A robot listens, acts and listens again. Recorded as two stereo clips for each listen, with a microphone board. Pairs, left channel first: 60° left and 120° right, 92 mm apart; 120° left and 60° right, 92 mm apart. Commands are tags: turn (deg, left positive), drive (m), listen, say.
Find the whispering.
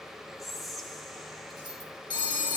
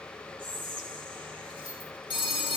<turn deg="-30"/>
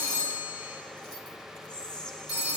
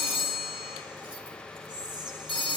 <turn deg="-20"/>
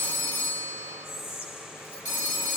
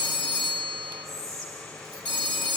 <say>Facing the whispering, 2 to 4 m away.</say>